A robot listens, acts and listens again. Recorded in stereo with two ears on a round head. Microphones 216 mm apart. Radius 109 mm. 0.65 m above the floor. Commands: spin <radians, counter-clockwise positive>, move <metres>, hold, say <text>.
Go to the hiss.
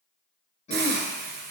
spin -0.79
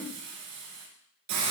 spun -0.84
spin -1.48
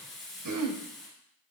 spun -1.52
move 1.0
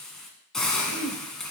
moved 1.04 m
move 1.0
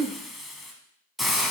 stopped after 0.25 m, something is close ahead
say I am next to the hiss.